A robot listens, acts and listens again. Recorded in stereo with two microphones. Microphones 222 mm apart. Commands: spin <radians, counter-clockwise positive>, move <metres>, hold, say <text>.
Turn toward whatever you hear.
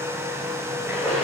spin -0.52
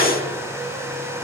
hold
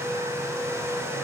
say I heard a splash, but can't make it out now. It was about 25° left or 145° right.